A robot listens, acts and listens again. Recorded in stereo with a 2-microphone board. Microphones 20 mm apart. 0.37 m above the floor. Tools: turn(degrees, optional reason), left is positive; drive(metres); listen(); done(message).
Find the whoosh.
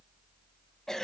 listen()
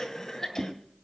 turn(degrees=-55, reason="The whoosh: about 55° right or 125° right.")
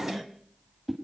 turn(degrees=-10, reason="So it is at 10° right.")
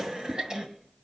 listen()
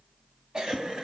listen()
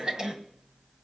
done("Facing where the whoosh came from. I can't hear it now.")